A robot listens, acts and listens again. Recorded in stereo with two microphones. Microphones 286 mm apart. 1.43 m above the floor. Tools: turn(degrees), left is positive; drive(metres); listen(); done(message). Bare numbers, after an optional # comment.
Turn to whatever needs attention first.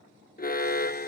# The alarm: about 30° left or 150° left.
turn(30)
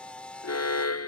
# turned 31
# So it is at 115° left.
turn(115)
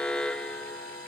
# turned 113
done("Found it: an alarm, straight ahead.")